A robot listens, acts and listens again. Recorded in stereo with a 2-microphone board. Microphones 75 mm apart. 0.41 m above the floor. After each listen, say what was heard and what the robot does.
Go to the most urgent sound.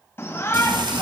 The shout: about 25° left or 155° left. Turn 25° left.
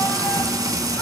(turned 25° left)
Keep listening.
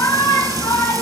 So it is at 125° left. Turn 125° left.
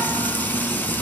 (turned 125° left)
Keep listening.
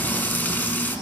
Keep listening.
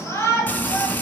The shout is now 50° left. Turn 50° left.
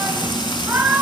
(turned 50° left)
The shout is now 15° right. Turn 15° right.
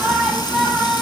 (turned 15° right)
Drive 1.0 m forward.
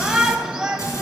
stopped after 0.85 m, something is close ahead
I am next to the shout.